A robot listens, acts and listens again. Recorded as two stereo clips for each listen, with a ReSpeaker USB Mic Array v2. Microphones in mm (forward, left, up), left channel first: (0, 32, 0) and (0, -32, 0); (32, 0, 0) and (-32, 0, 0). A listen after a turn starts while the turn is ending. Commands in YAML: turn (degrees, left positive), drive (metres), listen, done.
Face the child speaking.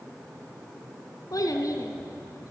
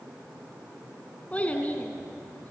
turn: 65
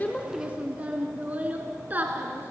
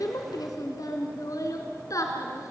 turn: -30
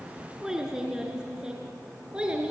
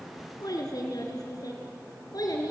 turn: -15
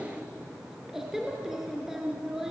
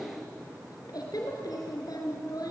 done: "Facing the child speaking."